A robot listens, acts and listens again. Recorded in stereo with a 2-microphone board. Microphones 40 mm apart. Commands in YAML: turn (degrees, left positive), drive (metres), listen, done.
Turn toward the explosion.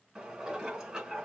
listen: true
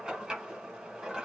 listen: true
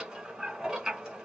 done: "I can't make out an explosion, only dishes clattering."